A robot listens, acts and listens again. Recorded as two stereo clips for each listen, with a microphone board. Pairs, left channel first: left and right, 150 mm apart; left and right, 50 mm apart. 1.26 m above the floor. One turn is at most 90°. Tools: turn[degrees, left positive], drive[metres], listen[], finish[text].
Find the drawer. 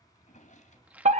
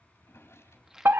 Thought: The drawer: about 55° left or 125° left.
Action: turn[55]
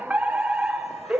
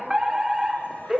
Action: listen[]
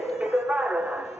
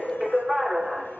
Action: listen[]
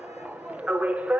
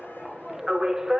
Action: finish[I heard a drawer, but can't make it out now. It was about straight ahead or 70° left.]